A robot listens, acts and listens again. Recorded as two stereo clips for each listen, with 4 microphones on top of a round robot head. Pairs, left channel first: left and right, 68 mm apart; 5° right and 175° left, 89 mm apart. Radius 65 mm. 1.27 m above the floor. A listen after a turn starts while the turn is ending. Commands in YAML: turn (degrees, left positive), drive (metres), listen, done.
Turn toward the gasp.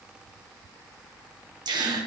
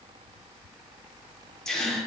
turn: -85
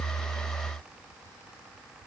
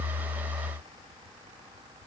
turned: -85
done: "I heard a gasp from this way, but can't make it out now."